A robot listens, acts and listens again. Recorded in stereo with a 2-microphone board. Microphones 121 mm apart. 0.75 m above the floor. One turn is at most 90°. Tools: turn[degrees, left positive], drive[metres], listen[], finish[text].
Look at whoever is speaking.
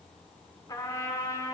Action: listen[]
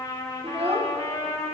Thought: The child speaking: about 55° right or 125° right.
Action: turn[-55]
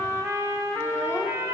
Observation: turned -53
Action: listen[]
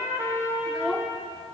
Action: finish[Facing the child speaking, under 1 m away.]